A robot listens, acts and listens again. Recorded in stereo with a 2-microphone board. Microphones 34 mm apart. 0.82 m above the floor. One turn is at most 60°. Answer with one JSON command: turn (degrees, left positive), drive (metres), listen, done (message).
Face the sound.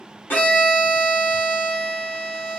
{"turn": 60}
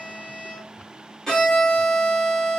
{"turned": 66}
{"turn": 15}
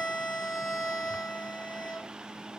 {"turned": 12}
{"done": "Facing the violin."}